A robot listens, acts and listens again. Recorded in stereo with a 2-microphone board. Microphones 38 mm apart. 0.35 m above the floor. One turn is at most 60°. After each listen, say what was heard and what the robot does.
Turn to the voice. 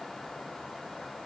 Keep listening.
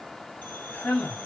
The man speaking: about 55° left or 125° left. Turn 55° left.
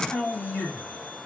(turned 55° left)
So it is at 60° left. Turn 60° left.
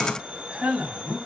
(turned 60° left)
The man speaking is now 25° right. Turn 25° right.
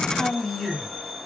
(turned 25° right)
Found it: a man speaking, straight ahead.